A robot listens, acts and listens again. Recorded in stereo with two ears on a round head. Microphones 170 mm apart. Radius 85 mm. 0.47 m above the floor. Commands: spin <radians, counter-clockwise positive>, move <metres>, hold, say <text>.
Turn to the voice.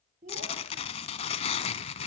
spin -0.79
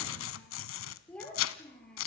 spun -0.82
say Facing the child speaking, over 4 m away.